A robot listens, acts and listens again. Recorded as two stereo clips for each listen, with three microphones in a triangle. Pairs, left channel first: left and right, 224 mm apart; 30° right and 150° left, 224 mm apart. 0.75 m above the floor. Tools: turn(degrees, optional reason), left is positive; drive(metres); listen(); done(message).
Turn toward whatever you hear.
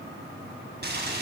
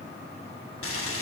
turn(degrees=-45, reason="The boiling: 45° right.")
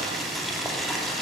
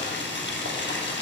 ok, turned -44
done("Found it: boiling, straight ahead.")